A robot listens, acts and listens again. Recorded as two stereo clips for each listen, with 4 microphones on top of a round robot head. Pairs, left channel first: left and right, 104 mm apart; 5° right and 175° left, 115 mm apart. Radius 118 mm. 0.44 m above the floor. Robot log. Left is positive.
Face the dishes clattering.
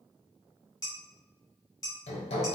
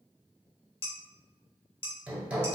note: The dishes clattering: 30° left.
cmd yaw +30
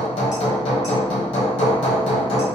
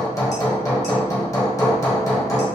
cmd idle
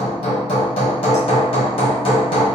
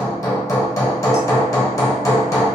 cmd idle
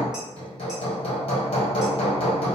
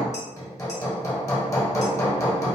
end: Facing where the dishes clattering came from. I can't hear it now.